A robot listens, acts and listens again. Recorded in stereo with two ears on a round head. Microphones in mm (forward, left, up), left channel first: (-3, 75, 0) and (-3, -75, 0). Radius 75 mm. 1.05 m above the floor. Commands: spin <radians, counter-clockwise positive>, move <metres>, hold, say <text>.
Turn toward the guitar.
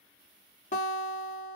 spin 0.79
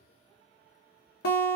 spin 1.48
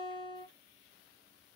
spin 0.61
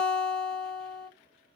say Facing the guitar.